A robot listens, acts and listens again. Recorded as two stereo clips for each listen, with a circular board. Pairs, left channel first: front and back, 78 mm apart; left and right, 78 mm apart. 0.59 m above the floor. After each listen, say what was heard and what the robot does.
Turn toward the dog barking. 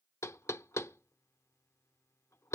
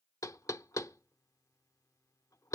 Keep listening.
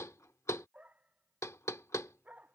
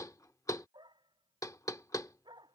The dog barking: 110° right. Turn 110° right.
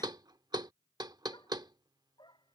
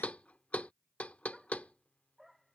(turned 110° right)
Facing the dog barking.